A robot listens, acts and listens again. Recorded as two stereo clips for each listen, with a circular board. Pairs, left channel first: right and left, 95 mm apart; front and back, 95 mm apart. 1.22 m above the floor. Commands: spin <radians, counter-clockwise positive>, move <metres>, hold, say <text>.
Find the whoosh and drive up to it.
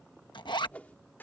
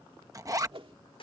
spin -2.88
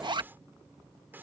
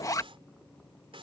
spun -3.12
spin 0.26
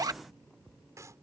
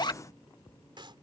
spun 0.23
hold
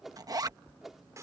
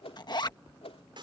move 1.0
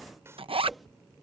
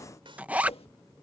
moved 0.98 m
hold
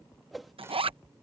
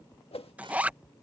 move 1.0
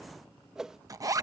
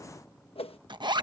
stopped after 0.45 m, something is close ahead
say Arrived at the whoosh, straight ahead.